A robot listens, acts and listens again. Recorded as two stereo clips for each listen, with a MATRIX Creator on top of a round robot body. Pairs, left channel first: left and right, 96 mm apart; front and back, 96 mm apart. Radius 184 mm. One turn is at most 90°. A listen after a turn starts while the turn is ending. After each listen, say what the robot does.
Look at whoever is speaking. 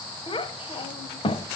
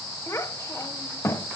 Turn 60° left.
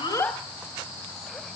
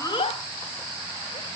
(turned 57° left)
Keep listening.
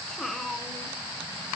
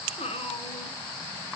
Facing the child speaking, 1 to 2 m away.